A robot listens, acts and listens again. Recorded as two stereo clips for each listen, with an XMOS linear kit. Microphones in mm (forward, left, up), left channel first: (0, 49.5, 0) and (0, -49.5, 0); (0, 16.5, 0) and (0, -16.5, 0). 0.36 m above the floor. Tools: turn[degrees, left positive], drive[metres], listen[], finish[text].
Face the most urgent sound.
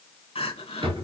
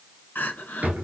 Action: turn[90]
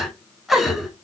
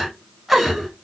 Action: finish[Facing the crying, under 1 m away.]